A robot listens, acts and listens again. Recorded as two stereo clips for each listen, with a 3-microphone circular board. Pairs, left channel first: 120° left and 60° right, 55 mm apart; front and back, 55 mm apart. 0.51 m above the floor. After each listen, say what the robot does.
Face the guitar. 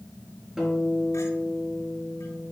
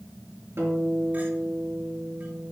Turn 140° right.
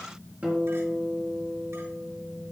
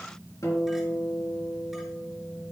Facing the guitar.